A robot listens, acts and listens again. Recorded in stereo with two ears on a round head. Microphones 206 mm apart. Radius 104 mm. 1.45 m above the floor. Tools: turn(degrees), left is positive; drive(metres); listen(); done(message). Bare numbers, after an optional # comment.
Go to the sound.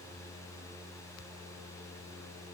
listen()
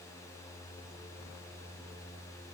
listen()
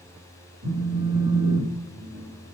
# The phone buzzing: about 70° right or 110° right.
turn(-70)
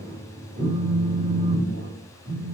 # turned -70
# So it is at 30° right.
turn(-30)
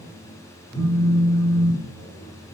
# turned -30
drive(1.0)
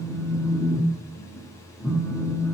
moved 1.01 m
drive(1.0)
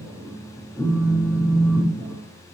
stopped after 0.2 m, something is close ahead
done("Arrived at the phone buzzing, straight ahead.")